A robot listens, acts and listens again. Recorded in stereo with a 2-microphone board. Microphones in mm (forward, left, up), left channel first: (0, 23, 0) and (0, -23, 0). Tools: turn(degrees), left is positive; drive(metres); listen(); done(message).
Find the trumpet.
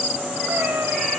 listen()
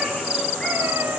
listen()
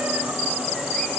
done("I can't make out a trumpet to turn to.")